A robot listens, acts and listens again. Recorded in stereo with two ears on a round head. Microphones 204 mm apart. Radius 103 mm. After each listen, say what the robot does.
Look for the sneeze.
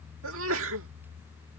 Turn 70° right.
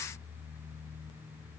Keep listening.
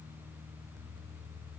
I heard a sneeze, but can't make it out now. It was about straight ahead or 40° right.